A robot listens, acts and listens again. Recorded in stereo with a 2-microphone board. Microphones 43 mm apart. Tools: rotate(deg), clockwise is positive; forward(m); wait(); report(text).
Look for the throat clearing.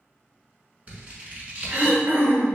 rotate(70)
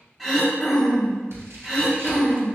report("Found it: throat clearing, straight ahead, under 1 m away.")